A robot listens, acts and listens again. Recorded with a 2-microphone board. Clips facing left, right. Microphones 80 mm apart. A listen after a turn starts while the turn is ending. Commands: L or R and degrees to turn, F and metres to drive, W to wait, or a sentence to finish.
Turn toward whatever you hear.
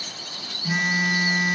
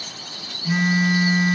L30
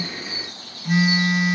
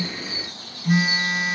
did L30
R10
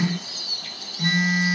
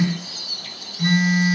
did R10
Facing the phone buzzing.